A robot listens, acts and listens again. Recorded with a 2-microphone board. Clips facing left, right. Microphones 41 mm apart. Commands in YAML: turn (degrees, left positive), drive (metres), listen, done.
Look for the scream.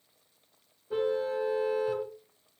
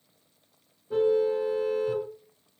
listen: true
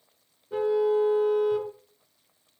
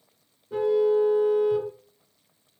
listen: true
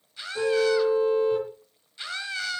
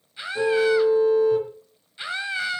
turn: -20
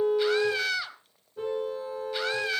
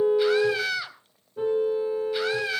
done: "Found it: a scream, straight ahead."